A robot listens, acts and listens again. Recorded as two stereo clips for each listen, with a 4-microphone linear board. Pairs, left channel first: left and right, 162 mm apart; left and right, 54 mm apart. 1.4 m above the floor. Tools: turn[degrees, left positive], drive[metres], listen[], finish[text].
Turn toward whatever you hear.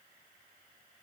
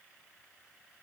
Action: listen[]
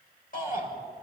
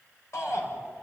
Thought: The shout: about 60° left or 120° left.
Action: turn[60]
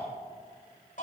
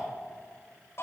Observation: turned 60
Thought: So it is at 55° left.
Action: turn[55]
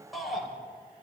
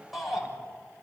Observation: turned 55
Action: finish[Facing the shout, over 4 m away.]